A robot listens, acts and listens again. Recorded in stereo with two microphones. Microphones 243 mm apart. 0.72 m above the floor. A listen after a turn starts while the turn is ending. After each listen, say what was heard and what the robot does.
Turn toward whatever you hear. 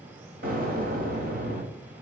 The explosion: about 35° right or 145° right. Turn 35° right.
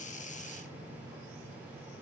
Keep listening.
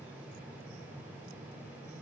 I heard an explosion, but can't make it out now. It was about straight ahead or 110° right.